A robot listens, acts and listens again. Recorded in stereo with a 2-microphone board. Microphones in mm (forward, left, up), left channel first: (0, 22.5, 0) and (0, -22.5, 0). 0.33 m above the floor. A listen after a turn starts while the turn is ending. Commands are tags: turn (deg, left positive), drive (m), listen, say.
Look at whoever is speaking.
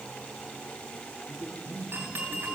<turn deg="60"/>
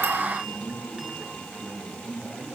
<turn deg="-10"/>
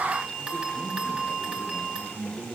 <turn deg="-15"/>
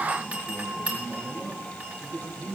<say>Facing the man speaking, over 4 m away.</say>